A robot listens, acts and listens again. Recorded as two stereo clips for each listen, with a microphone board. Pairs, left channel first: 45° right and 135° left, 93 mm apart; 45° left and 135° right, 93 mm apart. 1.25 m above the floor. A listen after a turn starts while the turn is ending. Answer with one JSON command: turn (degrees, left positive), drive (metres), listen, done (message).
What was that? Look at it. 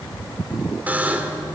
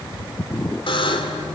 {"turn": 65}
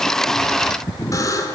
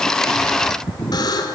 {"done": "Found it: a buzzer, straight ahead, 2 to 4 m away."}